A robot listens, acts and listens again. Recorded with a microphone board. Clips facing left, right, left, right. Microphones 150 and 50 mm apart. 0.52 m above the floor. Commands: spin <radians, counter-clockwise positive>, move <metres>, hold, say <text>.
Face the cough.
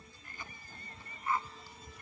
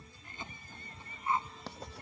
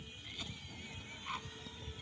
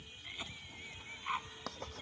spin -0.35
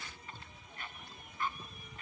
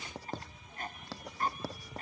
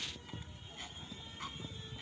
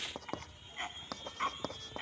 spin -2.36
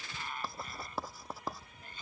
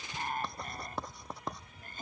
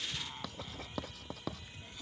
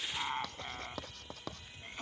spin -0.87
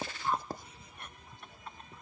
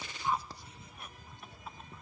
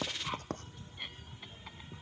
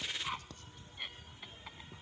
say Found it: a cough, straight ahead.